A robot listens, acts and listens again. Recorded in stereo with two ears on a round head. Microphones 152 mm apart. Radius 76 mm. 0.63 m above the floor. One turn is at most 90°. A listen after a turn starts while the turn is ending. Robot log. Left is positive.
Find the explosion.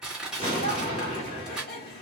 note: The explosion: about 35° left or 145° left.
cmd yaw +35
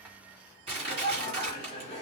cmd idle
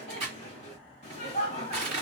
end: I heard an explosion, but can't make it out now. It was about straight ahead or 110° left.